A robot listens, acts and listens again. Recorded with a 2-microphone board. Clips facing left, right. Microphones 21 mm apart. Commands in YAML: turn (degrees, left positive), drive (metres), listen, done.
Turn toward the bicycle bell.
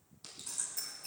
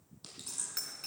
turn: -65
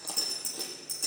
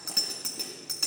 turn: -50
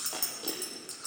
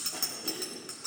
turn: -20
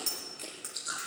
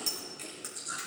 done: "Facing the bicycle bell."